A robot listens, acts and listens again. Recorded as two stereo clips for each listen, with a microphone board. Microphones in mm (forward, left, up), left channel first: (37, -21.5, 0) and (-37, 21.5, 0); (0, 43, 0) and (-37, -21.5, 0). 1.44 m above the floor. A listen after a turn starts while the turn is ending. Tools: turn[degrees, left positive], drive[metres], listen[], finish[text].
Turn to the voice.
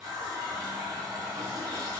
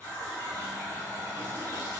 Action: listen[]
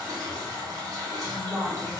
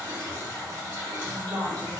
Thought: The woman speaking: 130° right.
Action: turn[-130]
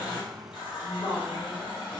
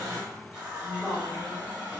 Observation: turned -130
Thought: The woman speaking is now 15° right.
Action: turn[-15]
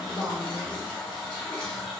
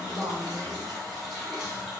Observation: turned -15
Action: finish[Facing the woman speaking, 1 to 2 m away.]